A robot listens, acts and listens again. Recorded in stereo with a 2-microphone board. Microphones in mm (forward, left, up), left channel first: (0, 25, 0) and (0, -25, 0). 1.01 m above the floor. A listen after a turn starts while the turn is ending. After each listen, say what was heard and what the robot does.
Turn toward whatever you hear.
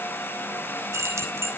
Turn 90° right.
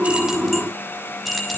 Found it: keys jangling, straight ahead.